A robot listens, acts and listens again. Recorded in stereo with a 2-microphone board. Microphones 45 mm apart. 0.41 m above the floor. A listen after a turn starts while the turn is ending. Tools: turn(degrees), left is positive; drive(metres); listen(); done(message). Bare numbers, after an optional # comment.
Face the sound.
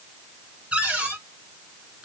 # The cupboard door: about 25° right or 155° right.
turn(-25)
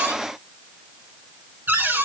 # So it is at 125° right.
turn(-125)
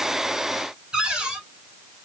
# The cupboard door is now 20° right.
turn(-20)
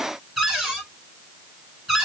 done("Found it: a cupboard door, straight ahead.")